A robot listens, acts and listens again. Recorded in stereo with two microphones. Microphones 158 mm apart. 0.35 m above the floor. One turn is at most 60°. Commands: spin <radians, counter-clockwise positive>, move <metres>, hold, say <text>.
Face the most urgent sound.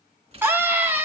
spin -0.52
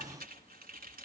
hold
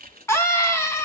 spin 0.35
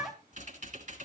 say Facing the scream.